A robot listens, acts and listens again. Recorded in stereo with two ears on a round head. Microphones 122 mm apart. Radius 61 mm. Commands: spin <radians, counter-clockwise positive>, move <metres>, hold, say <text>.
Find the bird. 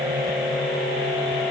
hold
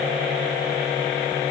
hold
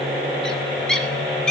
spin 0.52
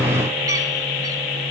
hold
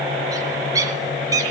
spin -0.44
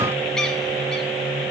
hold
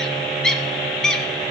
say Facing the bird, 2 to 4 m away.